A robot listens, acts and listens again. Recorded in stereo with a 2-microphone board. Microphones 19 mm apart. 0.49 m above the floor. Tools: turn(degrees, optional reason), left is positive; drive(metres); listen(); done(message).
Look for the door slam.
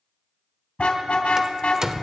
turn(degrees=-30, reason="The door slam: about 30° right or 150° right.")
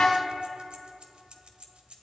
listen()
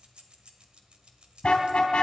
done("I heard a door slam, but can't make it out now. It was about straight ahead or 120° right.")